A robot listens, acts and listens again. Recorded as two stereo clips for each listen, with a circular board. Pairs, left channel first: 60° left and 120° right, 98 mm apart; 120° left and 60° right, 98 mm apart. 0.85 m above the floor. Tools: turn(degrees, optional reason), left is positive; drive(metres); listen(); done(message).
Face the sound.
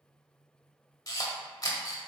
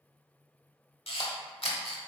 turn(degrees=110, reason="The camera shutter: 110° left.")
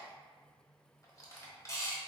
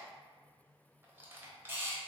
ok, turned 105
done("Found it: a camera shutter, straight ahead, 1 to 2 m away.")